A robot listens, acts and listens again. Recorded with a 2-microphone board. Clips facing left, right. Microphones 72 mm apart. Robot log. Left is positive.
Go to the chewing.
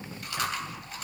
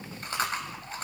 note: The chewing: about 35° right or 145° right.
cmd yaw -35
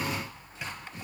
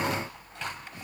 cmd idle
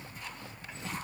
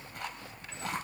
cmd idle
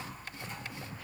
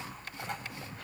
end: I heard chewing, but can't make it out now. It was about straight ahead or 110° right. I did not reach it.